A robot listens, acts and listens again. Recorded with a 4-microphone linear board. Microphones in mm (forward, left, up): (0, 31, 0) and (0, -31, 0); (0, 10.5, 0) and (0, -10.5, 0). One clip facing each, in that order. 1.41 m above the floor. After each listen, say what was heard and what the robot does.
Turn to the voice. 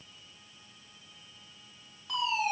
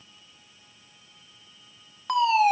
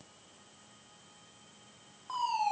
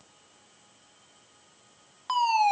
Keep listening.
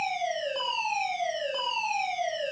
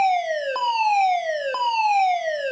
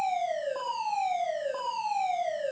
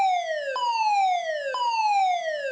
Keep listening.
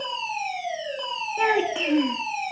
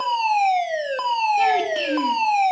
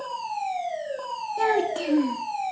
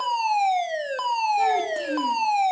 The child speaking: about 20° left or 160° left. Turn 20° left.
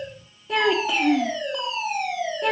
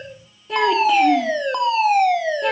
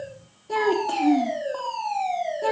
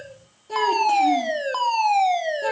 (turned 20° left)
Found it: a child speaking, straight ahead.